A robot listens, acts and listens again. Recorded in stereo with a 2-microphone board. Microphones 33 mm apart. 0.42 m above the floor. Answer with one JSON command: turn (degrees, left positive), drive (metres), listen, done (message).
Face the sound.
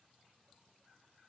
{"listen": true}
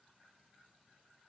{"listen": true}
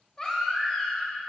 {"turn": 25}
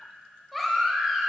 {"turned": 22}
{"done": "Found it: a baby crying, straight ahead, 1 to 2 m away."}